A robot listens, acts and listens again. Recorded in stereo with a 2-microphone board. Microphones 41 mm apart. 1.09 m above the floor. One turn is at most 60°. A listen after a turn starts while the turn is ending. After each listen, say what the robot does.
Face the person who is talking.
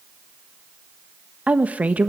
Turn 40° right.
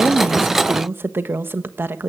Turn 60° right.
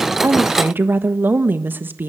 Turn 60° right.
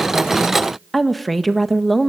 Facing the woman speaking, 1 to 2 m away.